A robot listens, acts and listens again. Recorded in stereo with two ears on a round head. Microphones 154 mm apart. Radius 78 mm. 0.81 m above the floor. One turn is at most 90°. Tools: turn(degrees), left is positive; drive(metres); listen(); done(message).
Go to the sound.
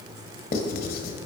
turn(degrees=55)
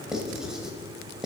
drive(metres=1.0)
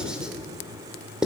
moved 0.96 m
drive(metres=1.0)
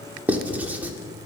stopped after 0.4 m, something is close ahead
turn(degrees=-10)
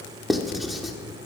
done("I am next to the writing.")